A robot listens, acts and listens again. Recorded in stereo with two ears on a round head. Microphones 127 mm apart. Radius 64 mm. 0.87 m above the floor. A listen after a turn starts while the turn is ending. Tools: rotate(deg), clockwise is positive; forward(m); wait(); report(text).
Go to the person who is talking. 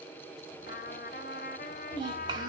rotate(30)
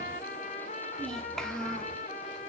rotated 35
forward(1.0)
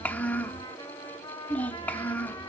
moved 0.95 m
rotate(-10)
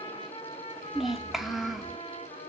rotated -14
forward(1.0)
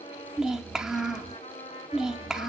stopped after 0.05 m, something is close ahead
report("Arrived at the child speaking, straight ahead.")